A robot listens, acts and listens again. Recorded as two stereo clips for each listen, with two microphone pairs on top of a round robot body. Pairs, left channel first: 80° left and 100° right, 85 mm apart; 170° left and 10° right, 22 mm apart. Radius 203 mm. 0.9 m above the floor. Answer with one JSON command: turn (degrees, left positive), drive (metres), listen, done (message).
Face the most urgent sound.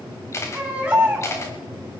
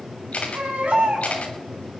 {"turn": -20}
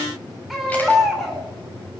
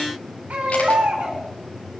{"done": "Facing the baby crying, 2 to 4 m away."}